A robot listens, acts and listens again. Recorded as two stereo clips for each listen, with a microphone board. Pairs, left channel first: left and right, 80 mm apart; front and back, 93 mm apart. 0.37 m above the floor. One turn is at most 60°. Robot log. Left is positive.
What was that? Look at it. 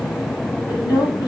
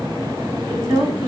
note: The woman speaking: 130° left.
cmd yaw +60
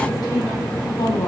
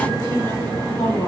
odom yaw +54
note: The woman speaking is now 70° left.
cmd yaw +60
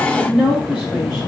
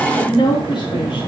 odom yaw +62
end: Found it: a woman speaking, straight ahead, 2 to 4 m away.